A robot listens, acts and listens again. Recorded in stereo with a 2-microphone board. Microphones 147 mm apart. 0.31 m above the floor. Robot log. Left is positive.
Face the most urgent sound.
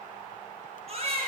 note: The baby crying: about 45° right or 135° right.
cmd yaw -45
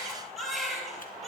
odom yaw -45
end: Facing the baby crying.